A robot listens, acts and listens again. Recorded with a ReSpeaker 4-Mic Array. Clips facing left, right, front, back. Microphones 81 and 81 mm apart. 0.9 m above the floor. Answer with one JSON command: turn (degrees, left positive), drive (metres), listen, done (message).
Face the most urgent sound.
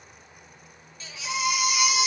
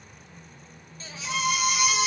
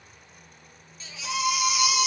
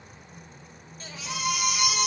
{"turn": -140}
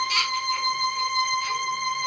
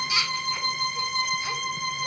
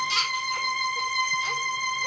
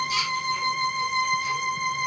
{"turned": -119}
{"turn": -20}
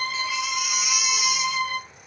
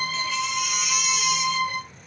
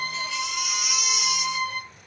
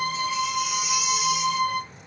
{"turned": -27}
{"turn": 10}
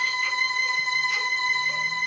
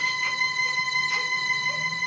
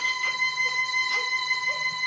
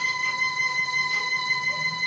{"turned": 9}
{"listen": true}
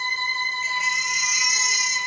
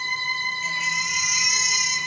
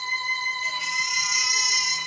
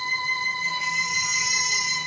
{"done": "Found it: a baby crying, straight ahead."}